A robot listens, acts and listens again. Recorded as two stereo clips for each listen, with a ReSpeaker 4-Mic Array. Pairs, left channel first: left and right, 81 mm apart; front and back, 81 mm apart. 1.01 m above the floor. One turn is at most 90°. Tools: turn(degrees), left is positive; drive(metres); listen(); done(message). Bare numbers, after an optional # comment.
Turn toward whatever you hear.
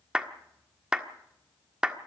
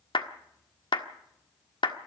# The clap: 10° right.
turn(-10)
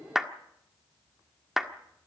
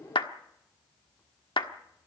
done("Found it: a clap, straight ahead, 1 to 2 m away.")